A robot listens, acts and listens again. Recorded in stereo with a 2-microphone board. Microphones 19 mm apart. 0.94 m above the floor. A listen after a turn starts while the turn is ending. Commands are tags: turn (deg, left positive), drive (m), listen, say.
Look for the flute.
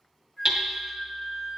<turn deg="20"/>
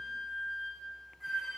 <turn deg="10"/>
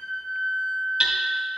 <say>Facing the flute, 1 to 2 m away.</say>